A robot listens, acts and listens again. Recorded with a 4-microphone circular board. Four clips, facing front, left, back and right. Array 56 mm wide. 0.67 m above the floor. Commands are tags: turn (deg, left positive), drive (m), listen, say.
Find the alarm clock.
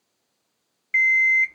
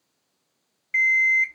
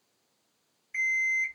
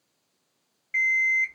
<turn deg="10"/>
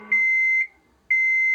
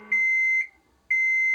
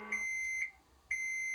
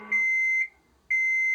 <say>Found it: an alarm clock, straight ahead, under 1 m away.</say>